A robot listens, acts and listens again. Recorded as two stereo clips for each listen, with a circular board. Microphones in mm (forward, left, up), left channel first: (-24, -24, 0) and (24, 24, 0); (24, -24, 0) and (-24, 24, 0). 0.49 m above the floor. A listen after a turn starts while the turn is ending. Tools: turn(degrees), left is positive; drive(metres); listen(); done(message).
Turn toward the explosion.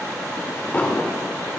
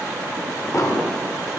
turn(degrees=-70)
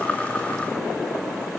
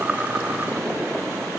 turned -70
done("I heard an explosion from this way, but can't make it out now.")